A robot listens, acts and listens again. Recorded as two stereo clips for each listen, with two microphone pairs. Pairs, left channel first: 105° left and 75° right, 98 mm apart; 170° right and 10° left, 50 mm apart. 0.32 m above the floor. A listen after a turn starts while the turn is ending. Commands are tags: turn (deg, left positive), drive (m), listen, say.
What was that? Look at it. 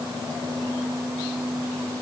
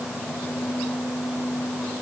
<listen/>
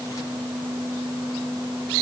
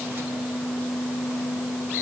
<listen/>
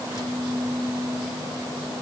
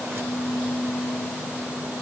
<say>I can't make out anything.</say>